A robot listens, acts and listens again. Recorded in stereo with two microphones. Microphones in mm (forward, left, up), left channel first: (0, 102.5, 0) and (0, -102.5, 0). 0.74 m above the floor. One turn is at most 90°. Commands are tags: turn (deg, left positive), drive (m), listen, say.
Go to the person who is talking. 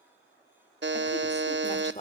<turn deg="30"/>
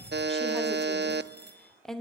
<drive m="1.0"/>
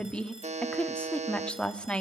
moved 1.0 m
<drive m="1.0"/>
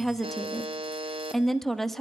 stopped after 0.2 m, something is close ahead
<say>Arrived at the woman speaking, straight ahead.</say>